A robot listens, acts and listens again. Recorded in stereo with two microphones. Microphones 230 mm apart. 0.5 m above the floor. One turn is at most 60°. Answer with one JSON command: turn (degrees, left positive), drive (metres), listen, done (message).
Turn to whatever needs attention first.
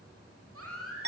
{"turn": -60}
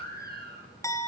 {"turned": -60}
{"turn": -40}
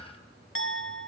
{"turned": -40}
{"listen": true}
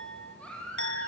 {"done": "Found it: a baby crying, straight ahead."}